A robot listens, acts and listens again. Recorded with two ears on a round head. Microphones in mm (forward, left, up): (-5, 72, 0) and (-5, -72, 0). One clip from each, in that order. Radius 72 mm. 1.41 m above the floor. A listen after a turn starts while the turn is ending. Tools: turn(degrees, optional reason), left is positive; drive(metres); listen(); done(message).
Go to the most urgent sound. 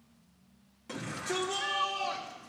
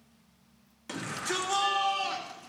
turn(degrees=-50, reason="The shout: about 50° right or 130° right.")
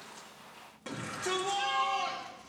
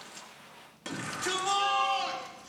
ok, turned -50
turn(degrees=-80, reason="So it is at 80° right.")
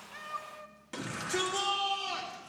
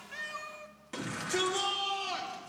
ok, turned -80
drive(metres=1.0)
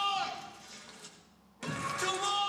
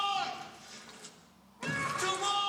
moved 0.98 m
drive(metres=1.0)
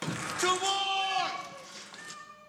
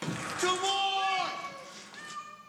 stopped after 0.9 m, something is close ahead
turn(degrees=15, reason="The shout is now 15° left.")
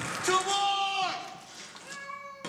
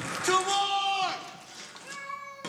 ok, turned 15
done("Arrived at the shout, straight ahead.")